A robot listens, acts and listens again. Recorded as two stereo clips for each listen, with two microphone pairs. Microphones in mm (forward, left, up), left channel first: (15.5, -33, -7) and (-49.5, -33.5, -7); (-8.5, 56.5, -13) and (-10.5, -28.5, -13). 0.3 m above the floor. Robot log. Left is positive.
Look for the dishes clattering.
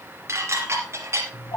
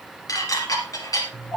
note: The dishes clattering: 135° left.
cmd yaw +135
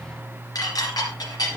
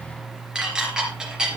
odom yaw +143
note: The dishes clattering is now 10° right.
cmd yaw -10
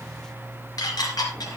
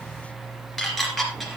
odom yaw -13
end: Facing the dishes clattering.